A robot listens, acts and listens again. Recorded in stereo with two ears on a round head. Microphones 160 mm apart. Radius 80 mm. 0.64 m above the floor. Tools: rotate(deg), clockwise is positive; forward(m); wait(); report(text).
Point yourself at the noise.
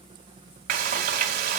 rotate(55)
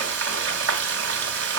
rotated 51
rotate(75)
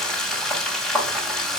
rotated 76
report("Found it: frying, straight ahead, 2 to 4 m away.")